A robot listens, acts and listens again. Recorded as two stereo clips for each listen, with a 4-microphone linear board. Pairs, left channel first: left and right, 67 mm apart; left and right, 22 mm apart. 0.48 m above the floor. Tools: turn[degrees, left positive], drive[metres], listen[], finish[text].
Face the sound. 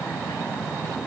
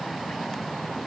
Action: listen[]
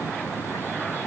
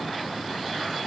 Action: listen[]
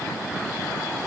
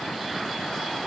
Action: finish[I can't make out anything.]